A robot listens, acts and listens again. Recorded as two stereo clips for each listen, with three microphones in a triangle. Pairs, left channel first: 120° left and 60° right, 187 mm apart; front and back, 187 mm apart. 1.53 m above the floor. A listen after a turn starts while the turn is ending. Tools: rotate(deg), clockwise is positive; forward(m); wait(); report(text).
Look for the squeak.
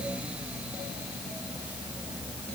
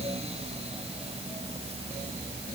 wait()
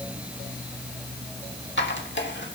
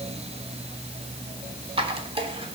rotate(-120)
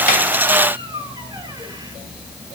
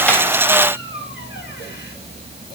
wait()
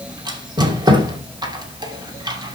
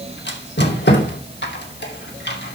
report("Found it: a squeak, straight ahead, 2 to 4 m away.")